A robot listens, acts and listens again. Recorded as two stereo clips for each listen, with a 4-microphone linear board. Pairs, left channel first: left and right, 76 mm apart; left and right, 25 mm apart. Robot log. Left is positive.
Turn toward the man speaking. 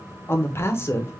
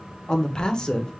note: The man speaking: about 35° left or 145° left.
cmd yaw +35
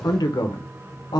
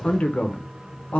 note: So it is at 110° left.
cmd yaw +110
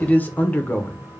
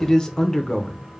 note: The man speaking is now 25° left.
cmd yaw +25
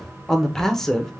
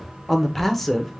end: Facing the man speaking, under 1 m away.